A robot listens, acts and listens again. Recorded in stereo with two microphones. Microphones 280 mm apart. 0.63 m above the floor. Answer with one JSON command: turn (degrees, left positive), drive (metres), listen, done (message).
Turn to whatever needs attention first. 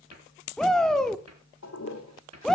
{"turn": 30}
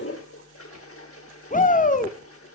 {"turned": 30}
{"turn": 145}
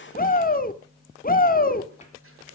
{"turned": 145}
{"turn": 35}
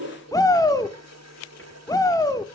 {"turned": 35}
{"turn": 15}
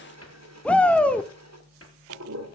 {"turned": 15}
{"done": "Found it: a shout, straight ahead."}